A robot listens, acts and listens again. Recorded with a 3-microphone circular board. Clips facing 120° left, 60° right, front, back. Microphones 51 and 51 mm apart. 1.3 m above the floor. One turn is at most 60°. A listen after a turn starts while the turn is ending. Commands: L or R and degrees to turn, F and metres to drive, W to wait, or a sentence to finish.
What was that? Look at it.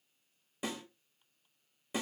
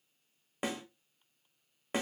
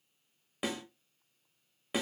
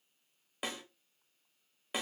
R60
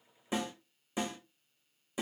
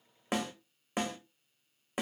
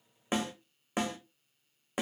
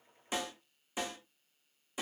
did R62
R30
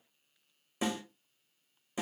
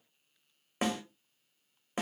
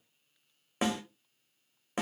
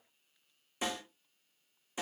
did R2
R30
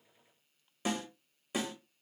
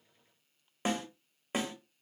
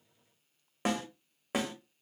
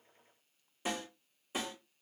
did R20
R10
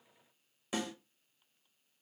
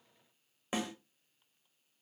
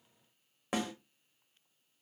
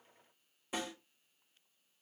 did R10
Found it: a snare drum, straight ahead, 1 to 2 m away.